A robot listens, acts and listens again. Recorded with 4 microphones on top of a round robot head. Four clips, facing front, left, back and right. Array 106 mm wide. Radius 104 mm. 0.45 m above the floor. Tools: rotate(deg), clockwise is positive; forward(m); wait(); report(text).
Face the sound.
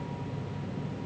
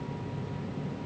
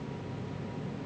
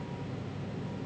wait()
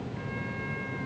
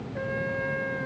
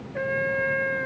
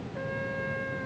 rotate(-170)
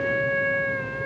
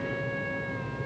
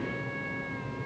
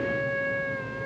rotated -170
rotate(15)
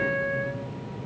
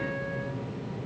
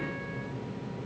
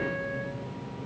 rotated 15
report("Found it: a trumpet, straight ahead.")